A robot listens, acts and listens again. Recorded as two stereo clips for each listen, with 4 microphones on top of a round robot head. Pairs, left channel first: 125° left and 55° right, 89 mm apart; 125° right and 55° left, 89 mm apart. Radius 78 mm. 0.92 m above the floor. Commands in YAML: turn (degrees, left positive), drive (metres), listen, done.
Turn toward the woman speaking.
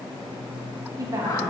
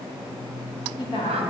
turn: -105
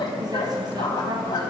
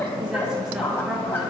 listen: true
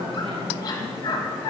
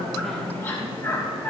listen: true
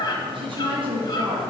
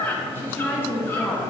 turn: -70
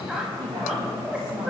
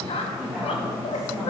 turn: -30
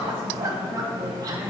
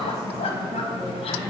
listen: true
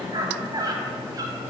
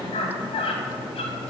listen: true
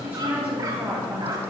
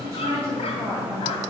done: "Found it: a woman speaking, straight ahead, 1 to 2 m away."